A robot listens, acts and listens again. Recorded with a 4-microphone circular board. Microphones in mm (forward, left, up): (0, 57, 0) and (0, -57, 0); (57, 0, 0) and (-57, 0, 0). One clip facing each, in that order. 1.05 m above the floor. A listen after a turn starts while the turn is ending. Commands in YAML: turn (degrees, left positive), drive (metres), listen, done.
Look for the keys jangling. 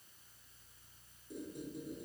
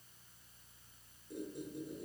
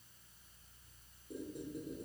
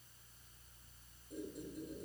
listen: true
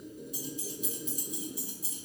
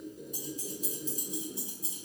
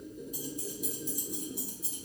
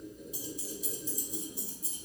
turn: -20
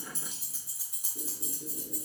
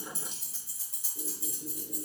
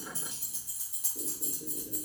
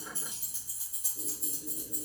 turn: 25
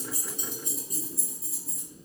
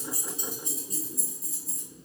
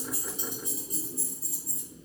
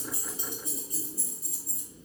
done: "Found it: keys jangling, straight ahead, 2 to 4 m away."